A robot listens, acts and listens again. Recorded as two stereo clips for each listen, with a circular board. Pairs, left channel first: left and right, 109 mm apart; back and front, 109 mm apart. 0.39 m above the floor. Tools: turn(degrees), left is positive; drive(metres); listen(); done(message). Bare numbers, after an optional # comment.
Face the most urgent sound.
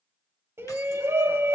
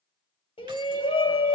# The shout: 155° right.
turn(-155)
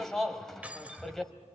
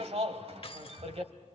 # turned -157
done("Found it: a shout, straight ahead.")